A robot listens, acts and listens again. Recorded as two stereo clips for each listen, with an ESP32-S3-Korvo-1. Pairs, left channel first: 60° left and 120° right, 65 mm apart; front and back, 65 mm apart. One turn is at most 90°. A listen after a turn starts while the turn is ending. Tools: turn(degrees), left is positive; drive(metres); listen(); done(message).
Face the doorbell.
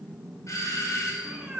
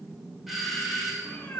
turn(degrees=90)
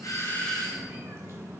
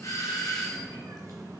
turn(degrees=-20)
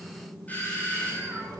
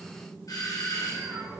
done("Facing the doorbell, 1 to 2 m away.")